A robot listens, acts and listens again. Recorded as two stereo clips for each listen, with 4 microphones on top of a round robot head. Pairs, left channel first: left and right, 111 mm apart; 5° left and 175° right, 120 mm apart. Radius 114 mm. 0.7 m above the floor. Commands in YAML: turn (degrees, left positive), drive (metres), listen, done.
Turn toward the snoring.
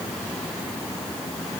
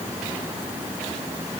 listen: true
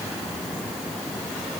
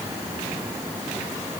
listen: true
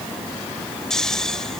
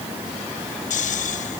done: "Found it: snoring, straight ahead."